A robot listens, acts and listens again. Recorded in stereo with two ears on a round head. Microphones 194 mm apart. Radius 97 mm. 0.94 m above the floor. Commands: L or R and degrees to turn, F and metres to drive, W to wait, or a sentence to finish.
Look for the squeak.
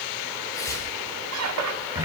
R90
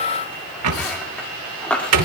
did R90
Found it: a squeak, straight ahead, 1 to 2 m away.